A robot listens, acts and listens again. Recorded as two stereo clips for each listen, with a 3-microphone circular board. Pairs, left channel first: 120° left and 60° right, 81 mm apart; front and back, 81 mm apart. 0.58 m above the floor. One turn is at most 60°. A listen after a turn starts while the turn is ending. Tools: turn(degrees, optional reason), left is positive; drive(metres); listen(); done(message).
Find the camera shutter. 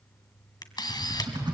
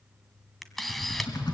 turn(degrees=60, reason="The camera shutter: 85° left.")
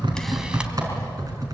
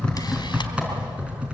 turn(degrees=25, reason="Nothing new. It was at 25° left.")
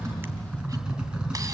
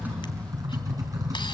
listen()
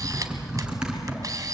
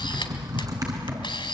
turn(degrees=-15, reason="The camera shutter is now 15° right.")
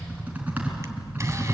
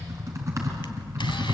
listen()
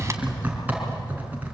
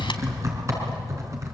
listen()
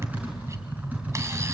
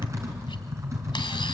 done("I heard a camera shutter from this way, but can't make it out now.")